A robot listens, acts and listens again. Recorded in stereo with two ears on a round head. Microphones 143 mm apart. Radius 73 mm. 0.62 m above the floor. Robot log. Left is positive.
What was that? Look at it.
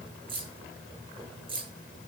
note: The keys jangling: about 35° right or 145° right.
cmd yaw -35
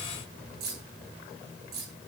note: So it is at 110° right.
cmd yaw -110
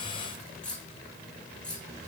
end: Found it: keys jangling, straight ahead, over 4 m away.